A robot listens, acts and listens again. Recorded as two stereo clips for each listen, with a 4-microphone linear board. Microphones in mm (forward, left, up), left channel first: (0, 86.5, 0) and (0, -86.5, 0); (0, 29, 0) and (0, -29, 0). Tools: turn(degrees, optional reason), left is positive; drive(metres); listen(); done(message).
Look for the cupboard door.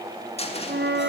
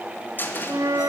turn(degrees=35, reason="The cupboard door: about 35° left or 145° left.")
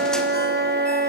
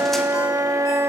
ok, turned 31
listen()
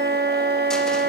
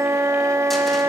listen()
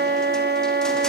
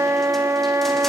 done("I heard a cupboard door, but can't make it out now. It was about 5° left or 115° left.")